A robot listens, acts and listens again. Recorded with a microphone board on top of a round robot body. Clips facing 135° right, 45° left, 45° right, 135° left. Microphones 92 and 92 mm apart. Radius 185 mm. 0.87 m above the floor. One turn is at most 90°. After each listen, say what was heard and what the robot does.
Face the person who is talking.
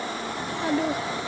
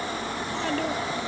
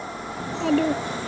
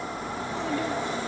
The child speaking: 60° right. Turn 60° right.
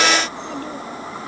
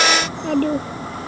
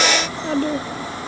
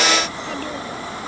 The child speaking is now 10° left. Turn 10° left.
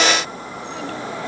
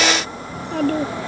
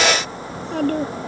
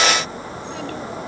Facing the child speaking.